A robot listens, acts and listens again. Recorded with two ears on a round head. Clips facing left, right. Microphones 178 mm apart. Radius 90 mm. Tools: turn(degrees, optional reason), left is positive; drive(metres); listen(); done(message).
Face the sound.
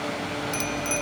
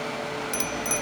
turn(degrees=-30)
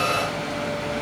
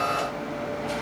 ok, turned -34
listen()
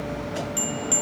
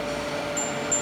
turn(degrees=20, reason="So it is at 20° left.")
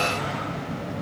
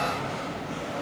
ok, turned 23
listen()
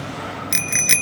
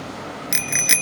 done("Facing the bicycle bell.")